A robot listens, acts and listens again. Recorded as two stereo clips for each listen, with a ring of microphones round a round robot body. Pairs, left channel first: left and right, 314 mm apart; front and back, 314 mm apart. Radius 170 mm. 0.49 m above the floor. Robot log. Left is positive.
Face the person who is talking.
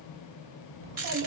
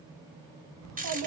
note: The child speaking: 145° right.
cmd yaw -145
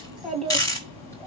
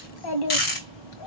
note: The child speaking is now 10° left.
cmd yaw +10
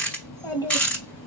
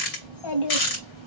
note: The child speaking is now 15° left.
cmd yaw +15
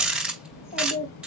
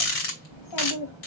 note: The child speaking is now 25° left.
cmd yaw +25
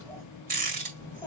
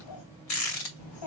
note: The child speaking is now 10° left.
cmd yaw +10
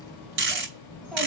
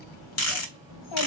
end: Facing the child speaking.